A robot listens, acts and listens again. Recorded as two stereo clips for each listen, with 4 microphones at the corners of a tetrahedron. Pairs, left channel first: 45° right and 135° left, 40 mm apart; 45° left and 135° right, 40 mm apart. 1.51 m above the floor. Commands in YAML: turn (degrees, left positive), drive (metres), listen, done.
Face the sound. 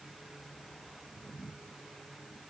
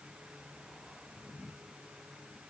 listen: true
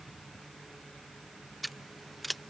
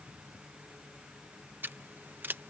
turn: -135
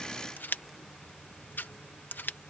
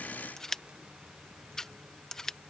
turn: -30
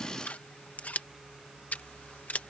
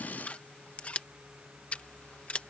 done: "Found it: scissors, straight ahead."